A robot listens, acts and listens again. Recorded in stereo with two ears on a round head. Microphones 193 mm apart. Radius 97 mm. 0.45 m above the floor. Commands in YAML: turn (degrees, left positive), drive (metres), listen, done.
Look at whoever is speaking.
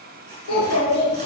turn: 90
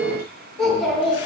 done: "Facing the child speaking."